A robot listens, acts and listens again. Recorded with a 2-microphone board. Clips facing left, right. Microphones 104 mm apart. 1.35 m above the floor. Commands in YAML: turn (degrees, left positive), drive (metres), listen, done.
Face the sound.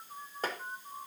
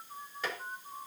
turn: 45
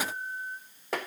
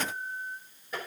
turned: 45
turn: 90
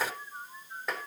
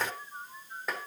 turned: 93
done: "Facing the tapping, 2 to 4 m away."